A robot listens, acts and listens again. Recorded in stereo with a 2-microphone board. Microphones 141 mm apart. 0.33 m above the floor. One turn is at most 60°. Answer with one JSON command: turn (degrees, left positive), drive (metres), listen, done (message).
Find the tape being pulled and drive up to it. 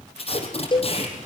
{"turn": 45}
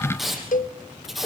{"drive": 1.0}
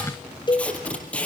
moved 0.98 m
{"turn": 10}
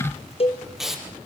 {"drive": 1.0}
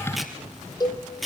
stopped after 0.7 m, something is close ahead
{"done": "Something is in my way. I am facing the tape being pulled but have not reached it."}